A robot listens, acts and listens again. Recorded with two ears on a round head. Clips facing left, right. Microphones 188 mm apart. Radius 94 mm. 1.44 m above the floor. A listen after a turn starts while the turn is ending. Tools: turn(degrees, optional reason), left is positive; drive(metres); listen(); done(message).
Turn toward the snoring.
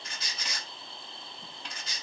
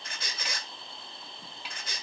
listen()
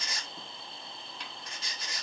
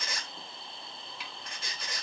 listen()
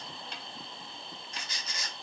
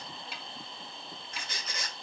done("I can't make out snoring to turn to.")